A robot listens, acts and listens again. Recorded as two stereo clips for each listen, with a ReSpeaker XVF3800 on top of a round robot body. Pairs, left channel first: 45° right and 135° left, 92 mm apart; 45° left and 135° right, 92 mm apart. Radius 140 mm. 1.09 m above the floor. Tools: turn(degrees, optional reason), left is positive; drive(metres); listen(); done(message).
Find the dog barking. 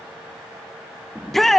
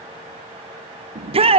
listen()
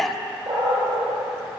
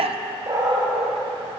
turn(degrees=175, reason="The dog barking: 175° left.")
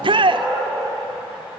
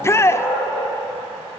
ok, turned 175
turn(degrees=55, reason="The dog barking is now 55° left.")
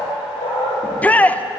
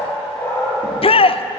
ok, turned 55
turn(degrees=-20, reason="The dog barking is now 20° right.")
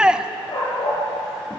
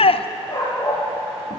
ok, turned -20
done("Facing the dog barking.")